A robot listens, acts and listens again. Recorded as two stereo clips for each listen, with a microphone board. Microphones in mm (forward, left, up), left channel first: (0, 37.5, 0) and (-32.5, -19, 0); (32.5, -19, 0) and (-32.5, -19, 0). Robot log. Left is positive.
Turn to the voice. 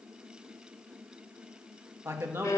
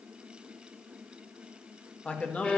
note: The man speaking: 70° right.
cmd yaw -70
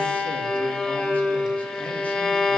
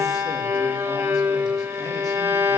cmd idle
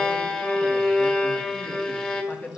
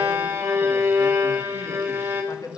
end: Found it: a man speaking, straight ahead, 1 to 2 m away.